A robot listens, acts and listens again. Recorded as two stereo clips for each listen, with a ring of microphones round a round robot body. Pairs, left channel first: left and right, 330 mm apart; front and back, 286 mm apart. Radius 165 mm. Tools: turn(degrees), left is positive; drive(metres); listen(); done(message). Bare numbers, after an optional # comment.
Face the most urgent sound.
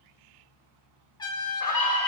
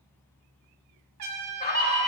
# The scream: 60° left.
turn(60)
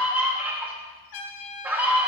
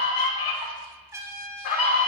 done("Found it: a scream, straight ahead.")